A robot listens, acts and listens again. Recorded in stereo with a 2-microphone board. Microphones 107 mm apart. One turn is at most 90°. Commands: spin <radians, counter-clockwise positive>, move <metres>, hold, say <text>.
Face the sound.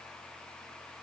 hold
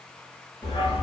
spin 0.96
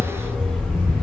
spin -0.17
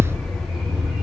spin -0.17
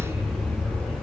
spin -0.26
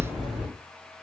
say Facing the dog barking, 2 to 4 m away.